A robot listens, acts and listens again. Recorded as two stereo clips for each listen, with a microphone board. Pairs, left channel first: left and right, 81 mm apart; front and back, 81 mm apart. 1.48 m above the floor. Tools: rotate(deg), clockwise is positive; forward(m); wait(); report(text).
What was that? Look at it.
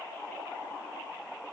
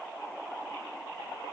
wait()
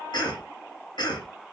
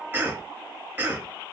rotate(-110)
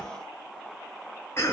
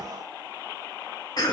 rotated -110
rotate(-30)
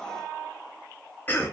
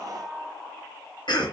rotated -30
rotate(-20)
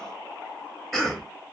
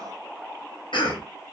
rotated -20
report("Facing the cough.")